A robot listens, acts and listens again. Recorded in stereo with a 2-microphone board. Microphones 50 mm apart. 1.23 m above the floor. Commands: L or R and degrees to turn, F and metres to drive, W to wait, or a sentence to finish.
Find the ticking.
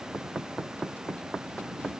W
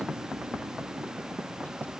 W
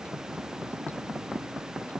I can't make out ticking to turn to.